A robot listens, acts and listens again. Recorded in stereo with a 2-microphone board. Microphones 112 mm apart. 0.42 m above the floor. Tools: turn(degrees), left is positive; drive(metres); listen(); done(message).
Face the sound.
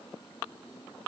listen()
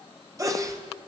turn(degrees=-30)
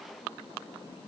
listen()
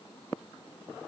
done("I heard a sneeze, but can't make it out now. It was about straight ahead or 120° right.")